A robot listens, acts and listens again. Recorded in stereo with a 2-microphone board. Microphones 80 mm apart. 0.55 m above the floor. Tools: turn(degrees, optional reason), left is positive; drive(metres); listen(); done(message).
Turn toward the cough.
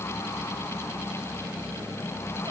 listen()
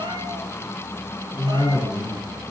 turn(degrees=40, reason="The cough: about 40° left or 140° left.")
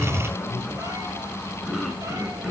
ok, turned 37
done("Found it: a cough, straight ahead.")